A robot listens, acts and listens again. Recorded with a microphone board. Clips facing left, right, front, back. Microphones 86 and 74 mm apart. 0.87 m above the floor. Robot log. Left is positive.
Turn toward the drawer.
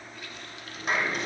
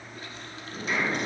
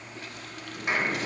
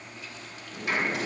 note: The drawer: 115° right.
cmd yaw -115
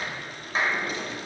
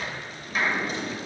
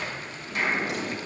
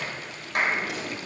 note: The drawer is now 30° right.
cmd yaw -30
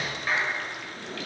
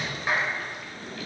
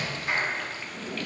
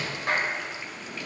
note: The drawer is now 25° left.
cmd yaw +25
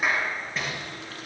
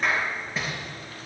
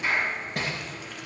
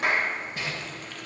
end: Found it: a drawer, straight ahead.